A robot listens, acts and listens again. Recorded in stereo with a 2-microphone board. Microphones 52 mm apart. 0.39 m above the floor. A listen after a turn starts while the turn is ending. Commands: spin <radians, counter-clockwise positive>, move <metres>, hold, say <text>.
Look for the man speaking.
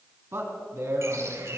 spin -1.05
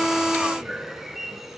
hold
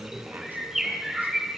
spin -0.70
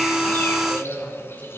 spin 0.52
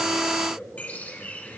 spin 0.26
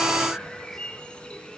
hold
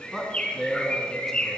say Found it: a man speaking, straight ahead, 2 to 4 m away.